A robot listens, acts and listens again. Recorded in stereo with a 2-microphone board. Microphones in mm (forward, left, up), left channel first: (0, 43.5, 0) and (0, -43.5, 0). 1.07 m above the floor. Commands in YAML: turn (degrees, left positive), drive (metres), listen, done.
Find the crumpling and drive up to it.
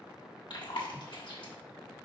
listen: true
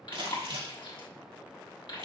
turn: -90
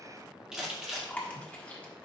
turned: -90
drive: 1.0
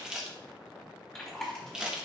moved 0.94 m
turn: -10
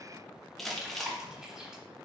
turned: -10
drive: 1.0
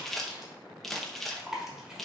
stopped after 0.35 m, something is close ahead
done: "I am next to the crumpling."